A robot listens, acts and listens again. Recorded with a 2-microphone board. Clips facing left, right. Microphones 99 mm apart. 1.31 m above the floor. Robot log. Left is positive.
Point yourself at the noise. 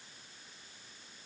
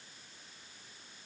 cmd idle
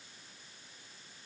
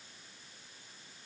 cmd idle
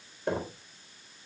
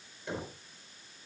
note: The knocking: about 55° left or 125° left.
cmd yaw +55
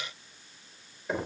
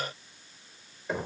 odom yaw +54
end: Found it: knocking, straight ahead.